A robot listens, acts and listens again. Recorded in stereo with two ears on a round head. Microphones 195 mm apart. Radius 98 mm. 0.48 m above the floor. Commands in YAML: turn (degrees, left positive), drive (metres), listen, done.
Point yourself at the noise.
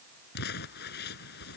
turn: 50
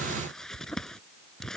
done: "Found it: crumpling, straight ahead."